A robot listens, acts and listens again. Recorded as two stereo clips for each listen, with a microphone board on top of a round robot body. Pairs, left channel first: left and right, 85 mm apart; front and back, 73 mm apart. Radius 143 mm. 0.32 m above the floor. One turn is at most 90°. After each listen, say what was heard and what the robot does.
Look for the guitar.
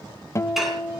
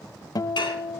The guitar: 35° left. Turn 35° left.
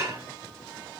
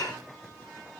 Keep listening.
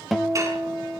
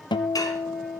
Found it: a guitar, straight ahead.